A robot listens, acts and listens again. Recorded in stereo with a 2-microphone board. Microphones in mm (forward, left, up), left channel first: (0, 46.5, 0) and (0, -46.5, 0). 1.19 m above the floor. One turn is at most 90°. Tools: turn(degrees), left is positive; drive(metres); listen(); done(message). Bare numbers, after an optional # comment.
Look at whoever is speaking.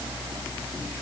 listen()
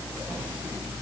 listen()
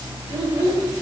# The child speaking: about 70° right or 110° right.
turn(-70)
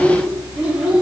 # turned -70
# So it is at 10° right.
turn(-10)
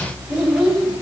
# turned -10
# The child speaking is now 10° right.
turn(-10)
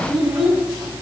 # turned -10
# The child speaking is now 10° right.
turn(-10)
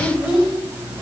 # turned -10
done("Found it: a child speaking, straight ahead, 2 to 4 m away.")